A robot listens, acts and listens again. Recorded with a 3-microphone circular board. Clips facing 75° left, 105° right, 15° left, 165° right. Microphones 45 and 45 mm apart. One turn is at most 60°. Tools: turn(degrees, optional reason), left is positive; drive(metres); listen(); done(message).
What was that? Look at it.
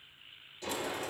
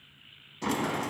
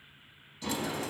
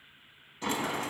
turn(degrees=-60, reason="The sliding door: 120° right.")
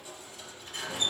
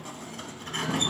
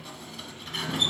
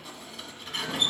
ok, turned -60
turn(degrees=-60, reason="The sliding door is now 75° right.")
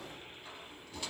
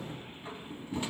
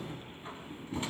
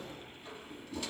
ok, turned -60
turn(degrees=-40, reason="The sliding door is now 40° right.")
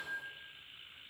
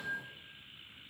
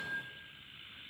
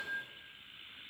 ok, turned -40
turn(degrees=-20, reason="The sliding door is now 20° right.")
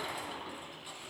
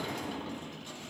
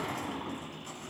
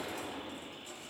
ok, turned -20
done("Facing the sliding door.")